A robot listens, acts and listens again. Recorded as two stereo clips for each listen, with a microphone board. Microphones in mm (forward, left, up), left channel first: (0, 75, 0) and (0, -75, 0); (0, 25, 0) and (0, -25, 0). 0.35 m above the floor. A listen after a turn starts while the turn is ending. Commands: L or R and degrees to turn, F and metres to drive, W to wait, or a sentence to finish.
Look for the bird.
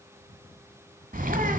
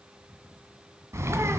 R70
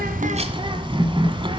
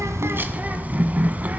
R35
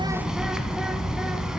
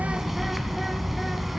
Facing the bird.